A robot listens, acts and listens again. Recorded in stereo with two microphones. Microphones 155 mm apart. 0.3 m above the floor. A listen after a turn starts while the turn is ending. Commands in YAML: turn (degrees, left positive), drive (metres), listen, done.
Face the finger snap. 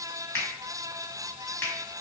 turn: 30
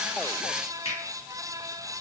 turn: 130
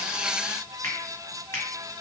turn: 20
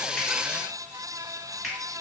done: "Facing the finger snap."